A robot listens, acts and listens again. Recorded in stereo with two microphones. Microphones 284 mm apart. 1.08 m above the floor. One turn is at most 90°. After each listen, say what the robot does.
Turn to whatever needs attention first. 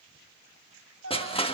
Turn 45° left.
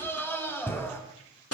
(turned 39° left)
Found it: a scream, straight ahead, over 4 m away.